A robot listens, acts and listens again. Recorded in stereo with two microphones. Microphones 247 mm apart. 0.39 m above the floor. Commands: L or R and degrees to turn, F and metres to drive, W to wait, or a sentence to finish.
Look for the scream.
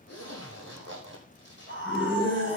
L50
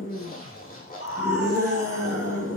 L75
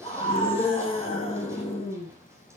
L25
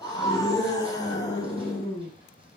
L15
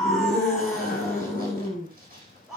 Facing the scream, over 4 m away.